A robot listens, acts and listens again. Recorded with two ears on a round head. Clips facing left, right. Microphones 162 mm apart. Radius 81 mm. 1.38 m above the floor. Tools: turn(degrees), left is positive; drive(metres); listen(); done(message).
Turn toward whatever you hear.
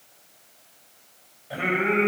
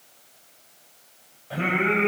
turn(degrees=30)
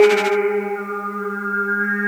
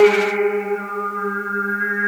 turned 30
turn(degrees=-30)
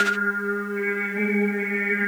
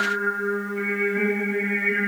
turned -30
done("Found it: singing, straight ahead, over 4 m away.")